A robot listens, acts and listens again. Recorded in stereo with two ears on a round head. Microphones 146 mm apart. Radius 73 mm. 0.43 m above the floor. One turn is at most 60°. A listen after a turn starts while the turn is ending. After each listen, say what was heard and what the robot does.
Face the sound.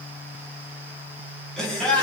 Turn 30° left.
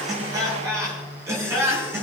So it is at 15° right. Turn 15° right.
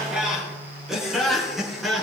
Facing the laughter.